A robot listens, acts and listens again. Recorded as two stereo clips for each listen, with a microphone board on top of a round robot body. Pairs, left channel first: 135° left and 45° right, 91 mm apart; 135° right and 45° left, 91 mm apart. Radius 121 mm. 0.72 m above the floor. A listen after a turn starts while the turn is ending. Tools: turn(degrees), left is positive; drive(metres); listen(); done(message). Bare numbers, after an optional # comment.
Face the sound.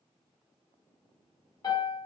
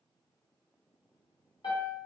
# The piano: straight behind.
turn(180)
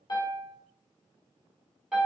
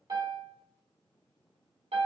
# The piano is now 35° left.
turn(35)
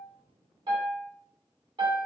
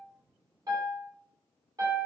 # The piano is now 10° right.
turn(-10)
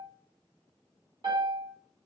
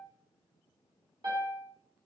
done("Facing the piano, 1 to 2 m away.")